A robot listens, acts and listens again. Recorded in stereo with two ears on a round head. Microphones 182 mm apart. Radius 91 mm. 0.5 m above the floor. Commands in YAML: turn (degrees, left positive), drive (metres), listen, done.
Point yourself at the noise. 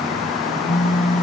turn: 40
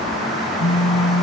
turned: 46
turn: 95
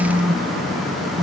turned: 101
done: "Found it: a phone buzzing, straight ahead."